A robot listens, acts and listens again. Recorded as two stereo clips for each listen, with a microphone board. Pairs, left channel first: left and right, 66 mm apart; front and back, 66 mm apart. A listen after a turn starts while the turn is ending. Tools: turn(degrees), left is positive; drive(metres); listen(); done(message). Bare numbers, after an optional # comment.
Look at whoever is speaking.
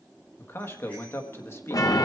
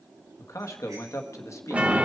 # The man speaking: 40° left.
turn(40)
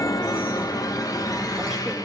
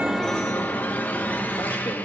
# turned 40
listen()
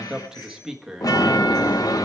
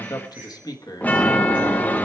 # The man speaking is now 10° right.
turn(-10)
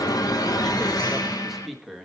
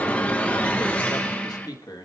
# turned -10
done("Found it: a man speaking, straight ahead.")